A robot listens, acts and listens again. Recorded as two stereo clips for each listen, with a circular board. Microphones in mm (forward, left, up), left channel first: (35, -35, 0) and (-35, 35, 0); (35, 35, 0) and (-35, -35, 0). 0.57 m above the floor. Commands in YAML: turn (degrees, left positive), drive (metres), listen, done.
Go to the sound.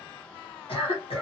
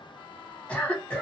turn: -30
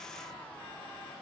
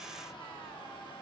listen: true
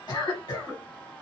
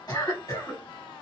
drive: 1.0
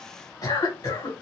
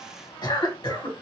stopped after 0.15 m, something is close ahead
done: "Blocked. The cough is further on, straight ahead."